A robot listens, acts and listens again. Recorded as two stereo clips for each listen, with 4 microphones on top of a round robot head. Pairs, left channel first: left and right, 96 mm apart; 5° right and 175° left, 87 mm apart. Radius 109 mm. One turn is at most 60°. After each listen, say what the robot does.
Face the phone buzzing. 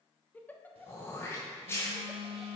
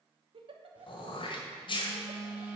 Turn 60° right.
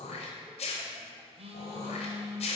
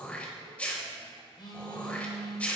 Turn 55° right.
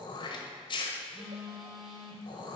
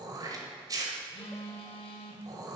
Facing the phone buzzing, under 1 m away.